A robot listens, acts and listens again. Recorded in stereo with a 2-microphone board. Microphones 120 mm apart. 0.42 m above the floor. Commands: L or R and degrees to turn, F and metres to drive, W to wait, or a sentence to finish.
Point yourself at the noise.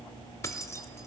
L25
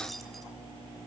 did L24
W
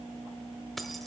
Facing the keys jangling, under 1 m away.